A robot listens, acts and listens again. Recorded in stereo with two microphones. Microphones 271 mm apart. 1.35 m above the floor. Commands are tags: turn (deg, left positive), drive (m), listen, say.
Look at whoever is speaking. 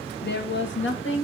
<turn deg="50"/>
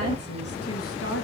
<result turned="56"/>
<turn deg="55"/>
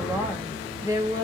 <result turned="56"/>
<turn deg="-15"/>
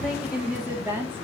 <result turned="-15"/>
<turn deg="-10"/>
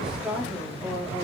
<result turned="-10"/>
<say>Found it: a woman speaking, straight ahead, 2 to 4 m away.</say>